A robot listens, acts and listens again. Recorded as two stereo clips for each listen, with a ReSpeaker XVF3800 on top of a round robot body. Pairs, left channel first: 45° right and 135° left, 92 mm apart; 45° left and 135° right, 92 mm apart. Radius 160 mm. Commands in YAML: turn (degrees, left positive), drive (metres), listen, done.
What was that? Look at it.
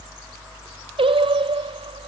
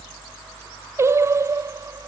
turn: 165
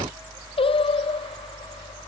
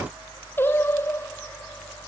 turn: -20
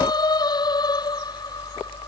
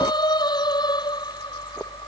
done: "Facing the singing."